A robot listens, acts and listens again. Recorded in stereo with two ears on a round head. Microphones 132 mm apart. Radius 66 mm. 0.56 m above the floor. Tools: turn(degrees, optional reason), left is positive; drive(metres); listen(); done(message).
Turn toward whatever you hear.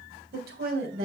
turn(degrees=-70, reason="The woman speaking: about 70° right or 110° right.")
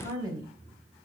turn(degrees=-25, reason="So it is at 25° right.")
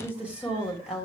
done("Found it: a woman speaking, straight ahead, 2 to 4 m away.")